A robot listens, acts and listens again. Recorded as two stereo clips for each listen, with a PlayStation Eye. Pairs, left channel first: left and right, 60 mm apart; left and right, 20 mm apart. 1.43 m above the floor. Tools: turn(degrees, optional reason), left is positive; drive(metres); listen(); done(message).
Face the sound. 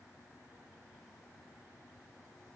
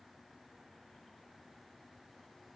listen()
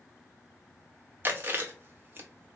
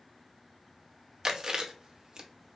turn(degrees=-35, reason="The chewing: about 35° right or 145° right.")
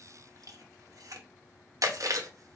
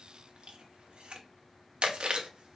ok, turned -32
turn(degrees=-110, reason="So it is at 110° right.")
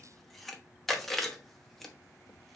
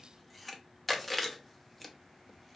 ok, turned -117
done("Found it: chewing, straight ahead, under 1 m away.")